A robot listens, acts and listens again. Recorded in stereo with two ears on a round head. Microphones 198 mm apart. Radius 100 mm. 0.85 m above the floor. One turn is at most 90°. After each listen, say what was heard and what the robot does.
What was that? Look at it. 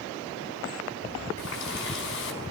The running tap: about 60° left or 120° left. Turn 60° left.
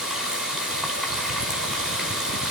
Found it: a running tap, straight ahead.